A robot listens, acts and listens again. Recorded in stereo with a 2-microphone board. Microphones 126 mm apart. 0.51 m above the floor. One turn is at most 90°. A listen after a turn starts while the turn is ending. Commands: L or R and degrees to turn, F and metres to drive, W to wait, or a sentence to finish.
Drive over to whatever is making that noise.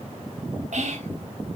R70
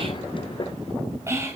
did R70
R25
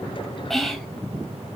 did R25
F1.0
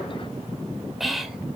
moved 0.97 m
F1.0
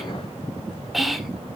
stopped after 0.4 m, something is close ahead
I am next to the whispering.